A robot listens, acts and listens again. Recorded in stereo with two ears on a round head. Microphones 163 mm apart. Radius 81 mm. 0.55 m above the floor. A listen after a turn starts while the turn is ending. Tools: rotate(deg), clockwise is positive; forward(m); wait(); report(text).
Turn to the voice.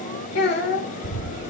rotate(-60)
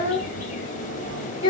rotate(-35)
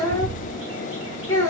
rotate(-20)
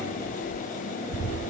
wait()
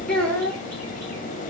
report("Facing the child speaking, 1 to 2 m away.")